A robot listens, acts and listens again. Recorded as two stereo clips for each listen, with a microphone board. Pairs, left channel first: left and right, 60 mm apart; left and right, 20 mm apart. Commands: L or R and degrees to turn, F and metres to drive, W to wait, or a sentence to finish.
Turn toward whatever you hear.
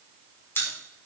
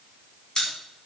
L35
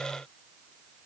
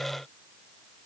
W
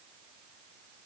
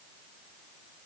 I heard a pop, but can't make it out now. It was about straight ahead or 110° left.